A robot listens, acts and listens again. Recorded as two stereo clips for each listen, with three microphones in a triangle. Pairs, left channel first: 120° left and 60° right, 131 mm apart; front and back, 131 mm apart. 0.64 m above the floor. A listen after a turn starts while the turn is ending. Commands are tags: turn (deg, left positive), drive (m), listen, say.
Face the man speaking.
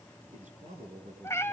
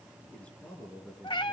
<turn deg="-80"/>
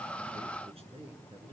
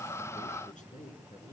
<turn deg="-20"/>
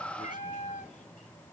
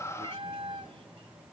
<listen/>
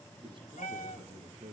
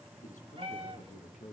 <turn deg="-10"/>
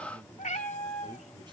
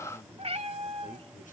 <say>Found it: a man speaking, straight ahead, over 4 m away.</say>